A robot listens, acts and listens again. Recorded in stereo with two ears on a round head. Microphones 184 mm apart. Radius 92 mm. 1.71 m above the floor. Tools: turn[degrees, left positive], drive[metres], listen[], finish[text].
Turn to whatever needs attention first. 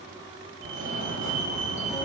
Thought: The fire alarm: about 65° right or 115° right.
Action: turn[-65]
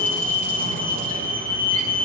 Thought: So it is at 45° right.
Action: turn[-45]
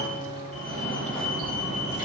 Action: finish[Found it: a fire alarm, straight ahead.]